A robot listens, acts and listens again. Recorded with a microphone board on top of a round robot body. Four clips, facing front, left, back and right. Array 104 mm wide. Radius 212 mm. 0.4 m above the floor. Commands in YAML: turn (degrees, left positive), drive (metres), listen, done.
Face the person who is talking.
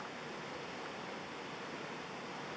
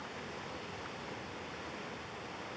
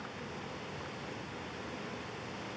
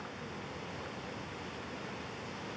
listen: true
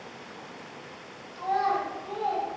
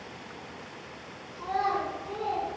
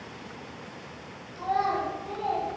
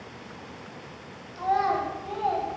turn: -90
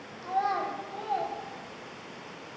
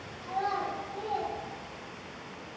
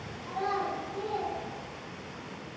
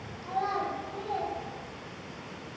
done: "Found it: a child speaking, straight ahead, under 1 m away."